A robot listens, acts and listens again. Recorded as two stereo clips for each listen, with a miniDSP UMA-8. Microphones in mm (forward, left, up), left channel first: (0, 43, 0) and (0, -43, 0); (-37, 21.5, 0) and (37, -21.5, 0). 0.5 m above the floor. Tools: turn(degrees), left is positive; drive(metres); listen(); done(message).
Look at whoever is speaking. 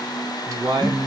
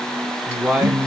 turn(degrees=-100)
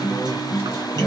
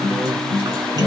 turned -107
listen()
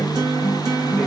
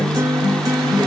listen()
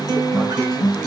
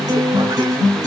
done("Facing where the man speaking came from. I can't hear it now.")